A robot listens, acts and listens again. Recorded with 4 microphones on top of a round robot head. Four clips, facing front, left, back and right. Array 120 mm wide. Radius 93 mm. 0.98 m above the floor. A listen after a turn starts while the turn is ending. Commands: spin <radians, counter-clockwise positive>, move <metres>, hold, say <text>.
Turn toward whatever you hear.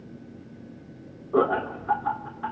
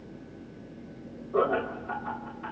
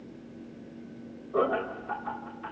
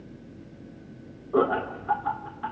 spin -0.61
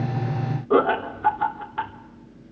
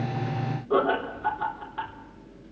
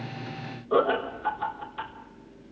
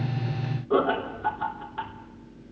say Found it: laughter, straight ahead, 2 to 4 m away.